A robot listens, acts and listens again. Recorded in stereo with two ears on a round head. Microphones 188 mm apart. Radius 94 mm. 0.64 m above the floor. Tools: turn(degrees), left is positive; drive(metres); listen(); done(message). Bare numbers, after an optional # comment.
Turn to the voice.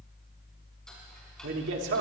# The man speaking: about 60° right or 120° right.
turn(-60)
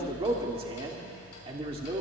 # So it is at 30° right.
turn(-30)
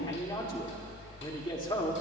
# The man speaking is now 25° left.
turn(25)
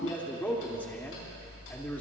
# The man speaking is now 10° left.
turn(10)
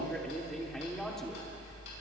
done("Found it: a man speaking, straight ahead, 1 to 2 m away.")